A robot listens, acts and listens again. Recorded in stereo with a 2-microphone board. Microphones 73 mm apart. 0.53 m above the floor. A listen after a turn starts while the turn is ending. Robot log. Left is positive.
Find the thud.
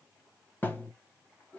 note: The thud: about 30° left or 150° left.
cmd yaw +30
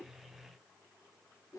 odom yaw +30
cmd idle
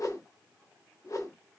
end: I heard a thud, but can't make it out now. It was about straight ahead or 120° left.